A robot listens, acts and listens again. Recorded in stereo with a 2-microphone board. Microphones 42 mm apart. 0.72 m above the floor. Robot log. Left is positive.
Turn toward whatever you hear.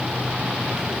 cmd idle
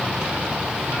cmd idle
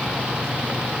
end: I can't make out anything to turn to.